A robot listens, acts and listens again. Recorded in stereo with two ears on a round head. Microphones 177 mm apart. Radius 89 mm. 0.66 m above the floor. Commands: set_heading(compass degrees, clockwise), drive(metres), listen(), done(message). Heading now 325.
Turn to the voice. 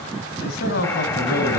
set_heading(270)
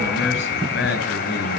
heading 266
set_heading(201)
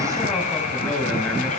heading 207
listen()
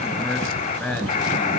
done("Facing the man speaking.")